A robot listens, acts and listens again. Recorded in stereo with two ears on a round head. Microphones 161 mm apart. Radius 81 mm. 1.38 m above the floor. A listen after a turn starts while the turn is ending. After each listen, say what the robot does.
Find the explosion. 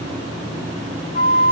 Keep listening.
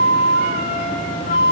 Keep listening.
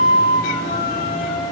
I can't make out an explosion, only a flute.